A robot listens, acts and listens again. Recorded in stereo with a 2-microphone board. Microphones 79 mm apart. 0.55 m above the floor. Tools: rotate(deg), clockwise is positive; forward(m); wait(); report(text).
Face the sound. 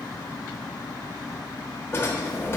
rotate(-30)
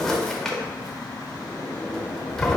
report("Found it: a drawer, straight ahead, under 1 m away.")